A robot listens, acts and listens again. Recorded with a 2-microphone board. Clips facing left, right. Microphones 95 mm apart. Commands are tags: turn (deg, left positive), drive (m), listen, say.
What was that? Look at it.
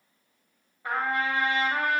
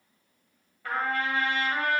<turn deg="20"/>
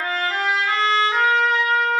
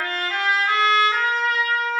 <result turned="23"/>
<say>Facing the trumpet, 1 to 2 m away.</say>